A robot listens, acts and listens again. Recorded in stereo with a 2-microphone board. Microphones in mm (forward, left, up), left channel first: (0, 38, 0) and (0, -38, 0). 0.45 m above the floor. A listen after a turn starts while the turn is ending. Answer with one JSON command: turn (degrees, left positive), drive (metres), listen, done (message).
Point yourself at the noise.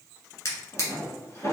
{"turn": 40}
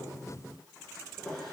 {"done": "Found it: a drawer, straight ahead, 1 to 2 m away."}